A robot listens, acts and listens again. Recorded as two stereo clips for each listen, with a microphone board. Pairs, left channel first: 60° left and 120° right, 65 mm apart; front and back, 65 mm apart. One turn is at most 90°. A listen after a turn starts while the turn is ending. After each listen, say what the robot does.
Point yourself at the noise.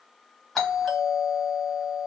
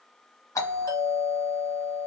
Turn 25° right.
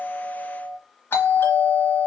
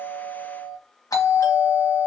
Turn 10° left.
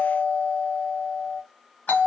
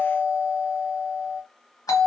Facing the doorbell.